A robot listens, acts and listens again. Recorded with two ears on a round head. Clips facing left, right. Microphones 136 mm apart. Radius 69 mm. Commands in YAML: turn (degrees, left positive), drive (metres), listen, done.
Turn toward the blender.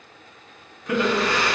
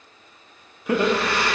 turn: -30
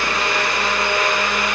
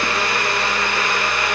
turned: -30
turn: 20
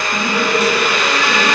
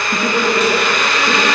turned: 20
turn: 10
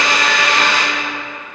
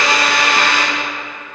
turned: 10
done: "Facing the blender, 2 to 4 m away."